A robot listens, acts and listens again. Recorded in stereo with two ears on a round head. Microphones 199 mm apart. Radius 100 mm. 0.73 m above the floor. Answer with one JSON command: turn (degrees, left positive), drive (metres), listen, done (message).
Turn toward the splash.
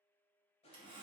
{"listen": true}
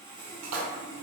{"turn": -75}
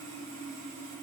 {"listen": true}
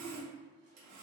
{"done": "I heard a splash, but can't make it out now. It was about straight ahead or 30° right."}